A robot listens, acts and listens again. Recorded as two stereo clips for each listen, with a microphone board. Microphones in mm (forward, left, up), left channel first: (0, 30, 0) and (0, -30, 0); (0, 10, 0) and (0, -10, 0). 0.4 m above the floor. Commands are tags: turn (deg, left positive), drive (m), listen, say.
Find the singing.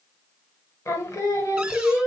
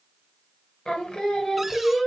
<turn deg="65"/>
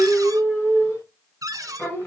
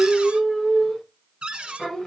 <turn deg="30"/>
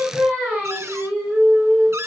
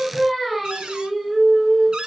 <turn deg="-25"/>
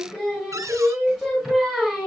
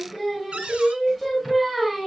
<turn deg="-10"/>
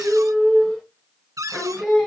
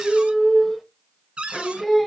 <say>Found it: singing, straight ahead.</say>